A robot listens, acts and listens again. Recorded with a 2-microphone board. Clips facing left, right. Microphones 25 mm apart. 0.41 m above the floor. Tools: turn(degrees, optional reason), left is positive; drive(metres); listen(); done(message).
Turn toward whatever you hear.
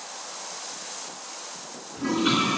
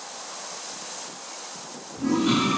turn(degrees=40, reason="The toilet flushing: about 40° left or 140° left.")
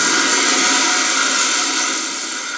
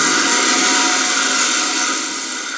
done("Found it: a toilet flushing, straight ahead.")